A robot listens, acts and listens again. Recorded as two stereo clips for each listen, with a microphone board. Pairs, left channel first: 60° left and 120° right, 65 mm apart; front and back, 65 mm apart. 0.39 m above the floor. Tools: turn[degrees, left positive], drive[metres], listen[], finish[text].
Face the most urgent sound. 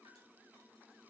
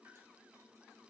Action: listen[]
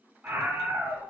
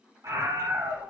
Thought: The scream: 175° right.
Action: turn[-175]
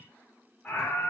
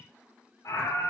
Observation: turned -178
Action: finish[Found it: a scream, straight ahead, 1 to 2 m away.]